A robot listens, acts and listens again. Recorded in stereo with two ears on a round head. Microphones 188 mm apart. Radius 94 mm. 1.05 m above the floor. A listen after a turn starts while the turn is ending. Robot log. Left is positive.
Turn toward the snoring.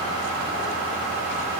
cmd idle
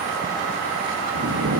note: The snoring: about 75° right or 105° right.
cmd yaw -75
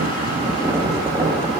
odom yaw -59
note: So it is at 15° right.
cmd yaw -15
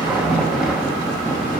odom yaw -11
end: Facing the snoring.